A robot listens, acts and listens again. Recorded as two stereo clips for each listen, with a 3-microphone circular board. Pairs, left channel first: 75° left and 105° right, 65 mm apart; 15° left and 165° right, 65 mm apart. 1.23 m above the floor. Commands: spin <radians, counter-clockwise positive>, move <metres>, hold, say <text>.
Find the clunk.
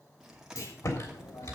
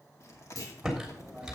spin 0.70
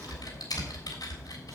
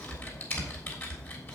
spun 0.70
say Facing where the clunk came from. I can't hear it now.